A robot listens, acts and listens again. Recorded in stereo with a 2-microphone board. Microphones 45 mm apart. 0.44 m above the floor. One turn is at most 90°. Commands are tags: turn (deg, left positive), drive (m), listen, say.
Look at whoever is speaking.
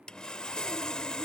<listen/>
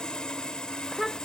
<turn deg="30"/>
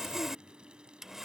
<listen/>
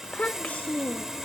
<turn deg="90"/>
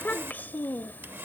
<turn deg="50"/>
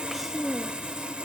<say>Facing the child speaking.</say>